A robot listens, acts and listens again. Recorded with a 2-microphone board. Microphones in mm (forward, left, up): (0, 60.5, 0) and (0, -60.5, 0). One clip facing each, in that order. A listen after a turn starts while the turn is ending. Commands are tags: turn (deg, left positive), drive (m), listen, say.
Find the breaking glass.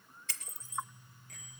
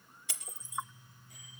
<turn deg="-30"/>
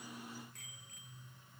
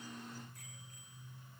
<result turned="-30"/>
<listen/>
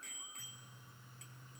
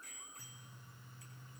<say>I heard breaking glass, but can't make it out now. It was about 20° left or 140° right.</say>